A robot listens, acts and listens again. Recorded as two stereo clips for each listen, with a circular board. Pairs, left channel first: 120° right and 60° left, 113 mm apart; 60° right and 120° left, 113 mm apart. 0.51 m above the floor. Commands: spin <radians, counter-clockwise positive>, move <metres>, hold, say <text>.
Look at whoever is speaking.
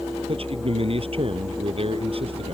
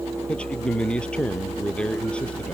spin 0.35
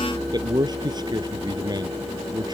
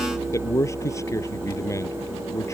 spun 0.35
say Found it: a man speaking, straight ahead.